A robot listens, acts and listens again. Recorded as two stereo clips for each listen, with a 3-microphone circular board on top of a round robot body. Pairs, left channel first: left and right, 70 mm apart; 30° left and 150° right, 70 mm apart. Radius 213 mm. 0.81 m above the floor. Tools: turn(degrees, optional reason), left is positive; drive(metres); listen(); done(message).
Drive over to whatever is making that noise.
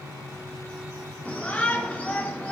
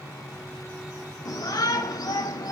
turn(degrees=20, reason="The shout: 20° left.")
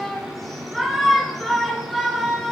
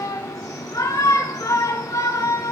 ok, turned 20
drive(metres=1.0)
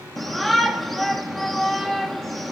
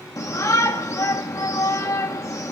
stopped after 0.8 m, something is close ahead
done("I am next to the shout.")